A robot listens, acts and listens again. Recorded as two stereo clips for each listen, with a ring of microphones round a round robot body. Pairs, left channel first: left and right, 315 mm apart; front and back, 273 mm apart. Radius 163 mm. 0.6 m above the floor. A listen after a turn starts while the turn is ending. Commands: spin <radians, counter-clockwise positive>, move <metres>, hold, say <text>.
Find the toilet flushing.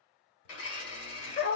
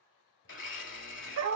hold
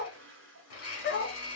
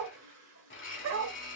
spin -2.53
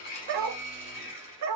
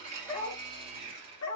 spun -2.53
hold
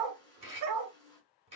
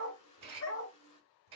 spin 0.17
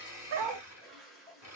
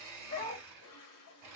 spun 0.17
say Found it: a toilet flushing, straight ahead, 1 to 2 m away.